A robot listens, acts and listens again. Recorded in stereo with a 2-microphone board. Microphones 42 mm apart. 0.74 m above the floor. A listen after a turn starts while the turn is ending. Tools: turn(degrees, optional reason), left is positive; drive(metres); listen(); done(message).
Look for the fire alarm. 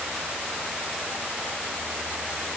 listen()
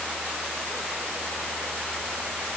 listen()
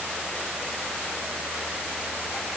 done("I can't make out a fire alarm.")